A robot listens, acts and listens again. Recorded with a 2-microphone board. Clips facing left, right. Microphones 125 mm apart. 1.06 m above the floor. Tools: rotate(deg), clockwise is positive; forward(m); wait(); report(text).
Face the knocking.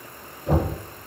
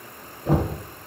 rotate(45)
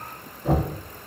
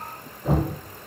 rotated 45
report("Found it: knocking, straight ahead.")